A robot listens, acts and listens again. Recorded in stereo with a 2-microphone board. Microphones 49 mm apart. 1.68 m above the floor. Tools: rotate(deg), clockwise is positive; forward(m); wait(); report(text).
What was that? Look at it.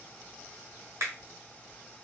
rotate(60)
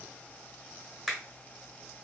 report("Facing the finger snap, 1 to 2 m away.")